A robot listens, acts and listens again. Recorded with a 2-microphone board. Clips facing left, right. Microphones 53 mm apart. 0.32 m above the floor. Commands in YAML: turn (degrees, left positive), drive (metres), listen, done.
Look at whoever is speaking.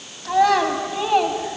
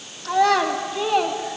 turn: 30
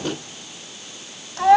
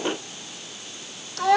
turn: 145
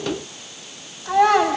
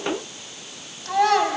turn: 15
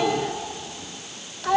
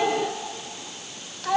done: "Found it: a child speaking, straight ahead."